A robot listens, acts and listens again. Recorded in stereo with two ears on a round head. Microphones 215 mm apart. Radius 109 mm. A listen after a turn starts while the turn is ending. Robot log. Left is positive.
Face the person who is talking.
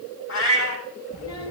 cmd yaw +90
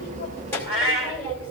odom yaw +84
note: So it is at 10° left.
cmd yaw +10
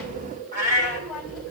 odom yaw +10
end: Facing the child speaking.